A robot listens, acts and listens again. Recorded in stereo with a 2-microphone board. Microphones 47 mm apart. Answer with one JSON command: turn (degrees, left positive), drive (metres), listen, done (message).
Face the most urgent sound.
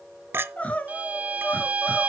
{"turn": 30}
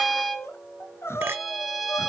{"turn": 120}
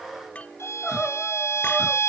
{"turn": 10}
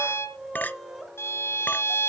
{"done": "Facing the crying, 1 to 2 m away."}